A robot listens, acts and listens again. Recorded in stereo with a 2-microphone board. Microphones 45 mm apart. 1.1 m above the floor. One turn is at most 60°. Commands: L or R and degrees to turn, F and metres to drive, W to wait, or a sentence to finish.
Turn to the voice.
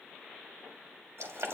W
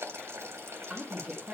L30
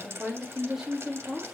L30
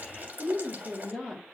R30
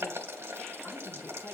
W
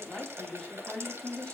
L20
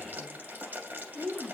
Found it: a woman speaking, straight ahead.